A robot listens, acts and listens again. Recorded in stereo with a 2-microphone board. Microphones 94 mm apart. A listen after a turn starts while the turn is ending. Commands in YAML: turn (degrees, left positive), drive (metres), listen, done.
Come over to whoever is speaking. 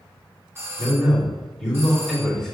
turn: 30
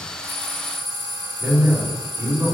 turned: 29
turn: -25
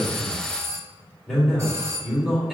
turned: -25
drive: 1.0
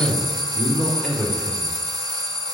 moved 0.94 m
drive: 1.0
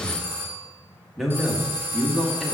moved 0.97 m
drive: 1.0
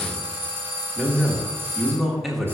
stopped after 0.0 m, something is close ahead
done: "Arrived at the man speaking, straight ahead."